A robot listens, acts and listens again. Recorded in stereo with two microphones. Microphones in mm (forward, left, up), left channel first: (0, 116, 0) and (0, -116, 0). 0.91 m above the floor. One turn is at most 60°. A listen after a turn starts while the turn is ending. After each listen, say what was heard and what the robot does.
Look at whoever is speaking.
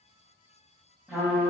Keep listening.
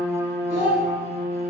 The child speaking: about 55° right or 125° right. Turn 55° right.
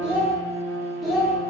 Found it: a child speaking, straight ahead.